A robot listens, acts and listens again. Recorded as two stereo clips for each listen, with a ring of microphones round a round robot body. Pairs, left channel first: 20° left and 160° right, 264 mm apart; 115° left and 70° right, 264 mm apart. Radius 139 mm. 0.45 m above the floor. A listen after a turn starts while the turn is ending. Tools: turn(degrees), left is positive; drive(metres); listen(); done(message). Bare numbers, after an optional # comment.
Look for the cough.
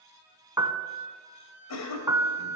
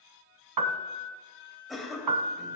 # The cough: 20° left.
turn(20)
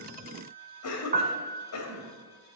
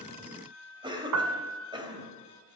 done("Facing the cough.")